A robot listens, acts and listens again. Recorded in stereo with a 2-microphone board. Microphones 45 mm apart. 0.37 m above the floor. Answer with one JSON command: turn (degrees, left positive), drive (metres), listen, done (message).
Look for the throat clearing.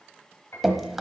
{"listen": true}
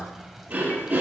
{"turn": -40}
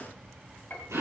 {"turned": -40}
{"turn": -100}
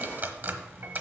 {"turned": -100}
{"listen": true}
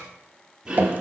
{"turn": -10}
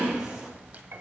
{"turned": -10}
{"done": "Facing the throat clearing."}